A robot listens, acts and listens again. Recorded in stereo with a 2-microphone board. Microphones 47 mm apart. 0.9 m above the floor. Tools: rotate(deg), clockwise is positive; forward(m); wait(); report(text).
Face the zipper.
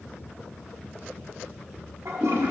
wait()
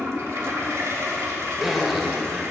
rotate(30)
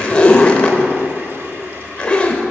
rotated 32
rotate(-25)
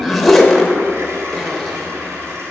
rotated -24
report("Facing the zipper, under 1 m away.")